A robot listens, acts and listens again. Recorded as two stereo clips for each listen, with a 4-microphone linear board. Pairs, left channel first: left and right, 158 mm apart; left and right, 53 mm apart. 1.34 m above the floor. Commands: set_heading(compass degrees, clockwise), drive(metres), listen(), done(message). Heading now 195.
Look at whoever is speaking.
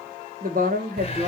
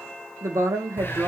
set_heading(260)
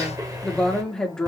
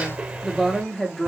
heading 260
done("Found it: a woman speaking, straight ahead.")